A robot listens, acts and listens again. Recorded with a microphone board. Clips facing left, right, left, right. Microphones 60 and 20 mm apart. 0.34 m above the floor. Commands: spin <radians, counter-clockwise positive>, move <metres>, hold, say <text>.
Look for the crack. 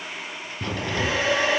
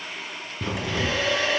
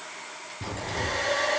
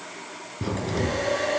spin -0.52
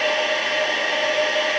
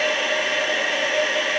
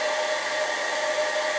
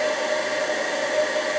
hold
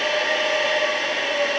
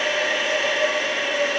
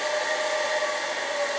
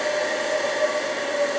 say I heard a crack, but can't make it out now. It was about 15° left or 135° right.